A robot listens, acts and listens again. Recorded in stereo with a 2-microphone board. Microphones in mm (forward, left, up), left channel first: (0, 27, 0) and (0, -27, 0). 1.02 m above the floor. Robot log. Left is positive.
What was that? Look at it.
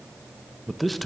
cmd yaw +30
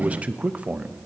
note: So it is at 30° right.
cmd yaw -30
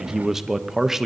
note: The man speaking is now 10° right.
cmd yaw -10
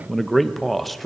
end: Found it: a man speaking, straight ahead.